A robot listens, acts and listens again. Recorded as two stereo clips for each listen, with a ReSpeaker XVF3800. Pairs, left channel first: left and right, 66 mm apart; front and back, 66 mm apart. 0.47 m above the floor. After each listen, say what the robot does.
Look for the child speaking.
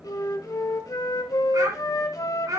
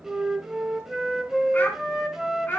Turn 65° right.
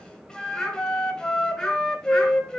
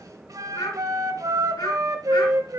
Facing the child speaking, 2 to 4 m away.